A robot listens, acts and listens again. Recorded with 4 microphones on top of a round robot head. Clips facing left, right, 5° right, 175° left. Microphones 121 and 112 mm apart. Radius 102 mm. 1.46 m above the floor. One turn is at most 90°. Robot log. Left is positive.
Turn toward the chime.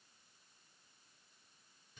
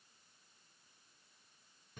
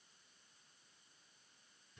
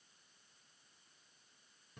cmd idle
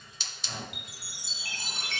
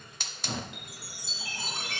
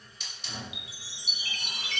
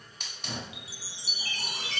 note: The chime: 120° left.
cmd yaw +90
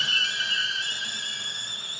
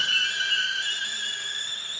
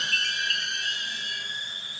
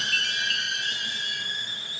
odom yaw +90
note: The chime is now 45° left.
cmd yaw +45
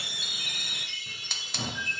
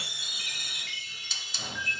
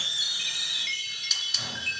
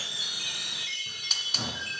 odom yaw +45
note: The chime is now 15° left.
cmd yaw +15
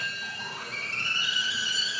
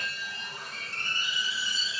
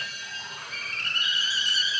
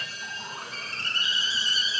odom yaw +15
end: Facing the chime.